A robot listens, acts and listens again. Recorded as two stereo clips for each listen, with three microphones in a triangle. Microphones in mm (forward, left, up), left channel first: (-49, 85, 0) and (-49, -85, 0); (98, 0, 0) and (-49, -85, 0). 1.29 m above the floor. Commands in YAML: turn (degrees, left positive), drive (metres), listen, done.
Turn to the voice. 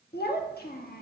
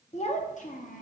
turn: 65
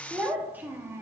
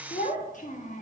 turn: -15
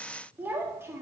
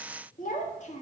turn: -15
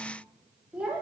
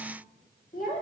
turn: -10
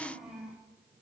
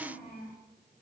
done: "Found it: a child speaking, straight ahead, 2 to 4 m away."